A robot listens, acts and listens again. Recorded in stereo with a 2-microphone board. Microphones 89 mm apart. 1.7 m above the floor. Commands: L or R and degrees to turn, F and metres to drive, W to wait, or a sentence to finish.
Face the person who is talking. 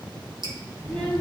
L20
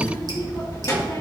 L140
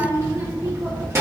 R30
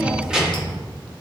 R10
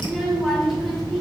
Facing the child speaking.